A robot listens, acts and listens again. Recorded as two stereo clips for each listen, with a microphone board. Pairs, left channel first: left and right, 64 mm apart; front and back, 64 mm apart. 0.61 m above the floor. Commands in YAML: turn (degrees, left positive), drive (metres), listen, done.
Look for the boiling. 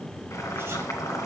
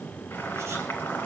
turn: 60
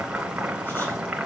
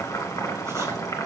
turn: -20
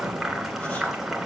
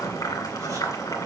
done: "Found it: boiling, straight ahead."